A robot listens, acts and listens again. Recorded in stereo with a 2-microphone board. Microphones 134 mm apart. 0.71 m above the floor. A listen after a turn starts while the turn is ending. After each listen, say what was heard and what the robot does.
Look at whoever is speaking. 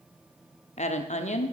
The woman speaking: about 55° left or 125° left. Turn 55° left.
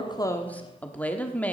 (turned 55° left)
So it is at 10° left. Turn 10° left.
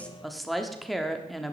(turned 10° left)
Facing the woman speaking, 1 to 2 m away.